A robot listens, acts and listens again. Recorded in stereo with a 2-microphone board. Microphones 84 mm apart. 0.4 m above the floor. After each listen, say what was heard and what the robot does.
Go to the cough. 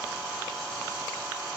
Keep listening.
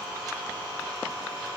Keep listening.
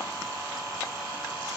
I can't make out a cough.